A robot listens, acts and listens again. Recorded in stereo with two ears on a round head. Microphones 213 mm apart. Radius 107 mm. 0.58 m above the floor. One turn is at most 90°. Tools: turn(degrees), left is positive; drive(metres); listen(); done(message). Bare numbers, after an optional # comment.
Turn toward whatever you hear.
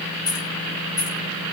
# The keys jangling: about 15° left or 165° left.
turn(15)
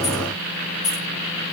# So it is at 150° left.
turn(90)
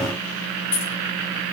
# The keys jangling is now 85° left.
turn(85)
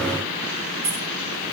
# The keys jangling is now 10° right.
turn(-10)
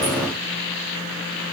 listen()
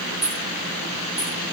done("Facing the keys jangling, under 1 m away.")